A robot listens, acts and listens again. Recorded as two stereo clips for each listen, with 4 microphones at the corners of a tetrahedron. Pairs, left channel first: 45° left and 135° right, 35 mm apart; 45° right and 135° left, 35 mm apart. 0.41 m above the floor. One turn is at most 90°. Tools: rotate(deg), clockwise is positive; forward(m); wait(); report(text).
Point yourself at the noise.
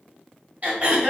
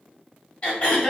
rotate(90)
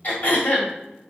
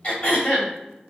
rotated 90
report("Facing the throat clearing.")